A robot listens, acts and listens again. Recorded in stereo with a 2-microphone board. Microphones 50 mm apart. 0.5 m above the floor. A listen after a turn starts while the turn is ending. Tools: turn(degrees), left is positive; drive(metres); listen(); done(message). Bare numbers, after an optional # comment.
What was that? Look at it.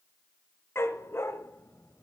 # The dog barking: about 50° left or 130° left.
turn(50)
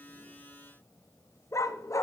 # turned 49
# So it is at 80° left.
turn(80)
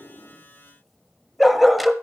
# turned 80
done("Facing the dog barking.")